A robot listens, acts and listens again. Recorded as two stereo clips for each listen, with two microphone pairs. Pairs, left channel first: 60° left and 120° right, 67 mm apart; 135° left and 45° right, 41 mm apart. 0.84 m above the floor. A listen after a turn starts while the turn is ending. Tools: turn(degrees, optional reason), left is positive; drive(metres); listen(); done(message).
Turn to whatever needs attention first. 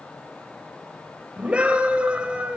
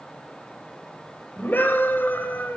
turn(degrees=170, reason="The scream: 170° left.")
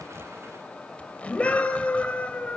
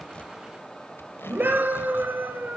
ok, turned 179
turn(degrees=-10, reason="The scream is now 10° right.")
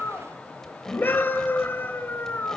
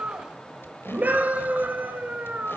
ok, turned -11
done("Found it: a scream, straight ahead, over 4 m away.")